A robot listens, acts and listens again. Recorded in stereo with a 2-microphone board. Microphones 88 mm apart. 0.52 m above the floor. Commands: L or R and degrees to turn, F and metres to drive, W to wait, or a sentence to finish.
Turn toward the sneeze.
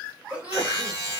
R30
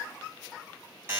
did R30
W
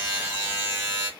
I heard a sneeze, but can't make it out now. It was about 15° left or 135° right.